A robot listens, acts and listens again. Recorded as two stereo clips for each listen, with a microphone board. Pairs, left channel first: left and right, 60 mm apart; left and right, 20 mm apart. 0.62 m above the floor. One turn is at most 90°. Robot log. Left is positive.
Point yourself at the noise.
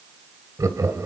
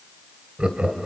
note: The laughter: about 70° right or 110° right.
cmd yaw -70
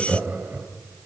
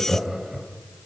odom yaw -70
note: So it is at 40° right.
cmd yaw -40
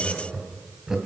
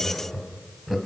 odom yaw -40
note: The laughter is now 10° right.
cmd yaw -10
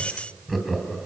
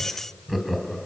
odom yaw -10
end: Found it: laughter, straight ahead, 2 to 4 m away.